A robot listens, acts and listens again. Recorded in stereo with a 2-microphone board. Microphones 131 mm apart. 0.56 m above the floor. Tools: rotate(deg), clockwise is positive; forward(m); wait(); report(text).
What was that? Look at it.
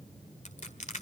rotate(-65)
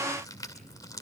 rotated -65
rotate(-30)
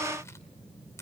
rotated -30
wait()
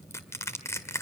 rotate(-25)
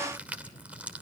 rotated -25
rotate(10)
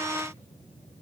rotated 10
wait()
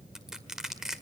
report("Facing the crushing.")